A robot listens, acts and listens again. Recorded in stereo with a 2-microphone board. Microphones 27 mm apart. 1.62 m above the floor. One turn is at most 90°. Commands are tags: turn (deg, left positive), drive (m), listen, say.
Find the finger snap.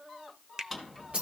<turn deg="-30"/>
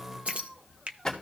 <turn deg="-90"/>
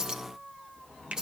<turn deg="-65"/>
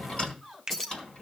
<turn deg="-15"/>
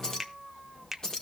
<say>Facing the finger snap, under 1 m away.</say>